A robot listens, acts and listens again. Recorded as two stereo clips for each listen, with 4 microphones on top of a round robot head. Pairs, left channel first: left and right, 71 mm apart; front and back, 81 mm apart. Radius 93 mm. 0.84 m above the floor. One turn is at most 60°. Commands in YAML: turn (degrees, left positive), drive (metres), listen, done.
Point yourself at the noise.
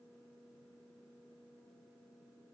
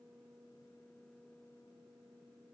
listen: true
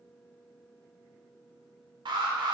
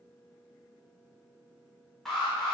turn: -60
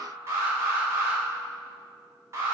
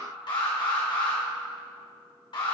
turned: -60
turn: -35
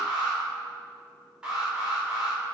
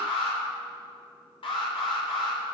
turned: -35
turn: -10
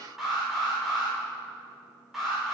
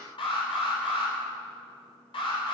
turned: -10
done: "Found it: an alarm, straight ahead, 2 to 4 m away."